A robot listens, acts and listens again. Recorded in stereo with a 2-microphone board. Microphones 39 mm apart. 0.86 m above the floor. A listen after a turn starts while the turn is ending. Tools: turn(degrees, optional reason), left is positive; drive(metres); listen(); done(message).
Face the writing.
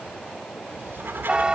turn(degrees=-70, reason="The writing: about 70° right or 110° right.")
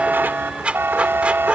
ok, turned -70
turn(degrees=-35, reason="So it is at 35° right.")
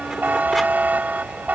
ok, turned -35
listen()
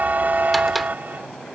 listen()
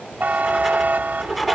done("Facing the writing.")